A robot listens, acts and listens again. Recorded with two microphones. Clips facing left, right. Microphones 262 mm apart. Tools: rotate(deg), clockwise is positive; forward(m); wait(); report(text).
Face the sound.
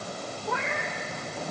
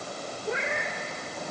rotate(25)
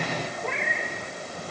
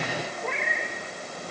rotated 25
report("Facing the cat meowing, 2 to 4 m away.")